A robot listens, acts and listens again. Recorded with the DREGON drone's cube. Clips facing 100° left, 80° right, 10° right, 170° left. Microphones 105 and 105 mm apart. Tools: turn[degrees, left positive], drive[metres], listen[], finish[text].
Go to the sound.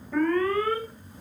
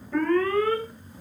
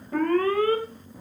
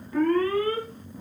Thought: The alarm: 15° left.
Action: turn[15]
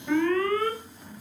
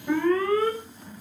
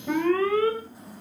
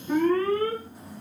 Action: drive[1.0]
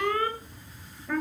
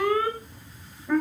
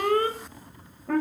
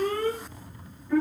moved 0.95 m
Action: drive[1.0]
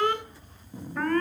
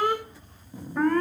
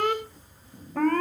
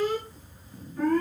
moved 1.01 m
Action: drive[1.0]
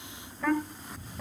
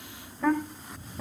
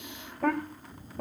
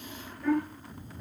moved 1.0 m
Action: drive[1.0]
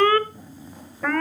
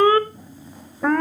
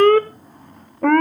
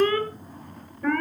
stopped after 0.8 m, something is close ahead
Thought: The alarm is now 10° right.
Action: turn[-10]
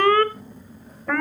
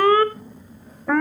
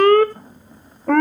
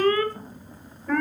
Action: finish[I am next to the alarm.]